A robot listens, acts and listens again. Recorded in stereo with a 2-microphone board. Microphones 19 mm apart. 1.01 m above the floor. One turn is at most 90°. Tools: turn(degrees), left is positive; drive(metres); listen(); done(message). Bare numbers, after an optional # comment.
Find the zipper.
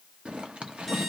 # The zipper: about 75° right or 105° right.
turn(-75)
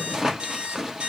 # So it is at 25° right.
turn(-25)
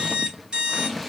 # The zipper is now 10° left.
turn(10)
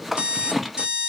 done("Found it: a zipper, straight ahead.")